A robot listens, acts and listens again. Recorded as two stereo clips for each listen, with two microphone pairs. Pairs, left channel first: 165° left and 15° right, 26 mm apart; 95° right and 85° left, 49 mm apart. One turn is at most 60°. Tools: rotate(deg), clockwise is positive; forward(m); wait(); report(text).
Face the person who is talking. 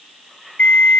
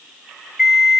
wait()
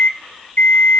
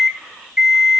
wait()
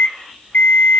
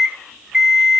report("I can't make out anyone speaking, only an alarm clock.")